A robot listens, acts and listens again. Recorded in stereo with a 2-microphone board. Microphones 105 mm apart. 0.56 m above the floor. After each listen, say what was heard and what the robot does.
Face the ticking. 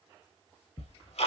Turn 90° left.
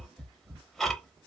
Found it: ticking, straight ahead.